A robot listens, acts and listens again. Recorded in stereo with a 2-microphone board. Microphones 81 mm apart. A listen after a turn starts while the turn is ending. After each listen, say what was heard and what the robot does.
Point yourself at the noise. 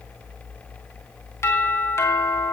The doorbell: about 35° left or 145° left. Turn 35° left.
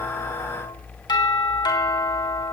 So it is at 105° left. Turn 105° left.
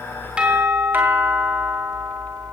The doorbell is now 25° right. Turn 25° right.
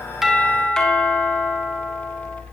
The doorbell is now 10° left. Turn 10° left.
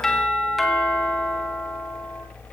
Facing the doorbell.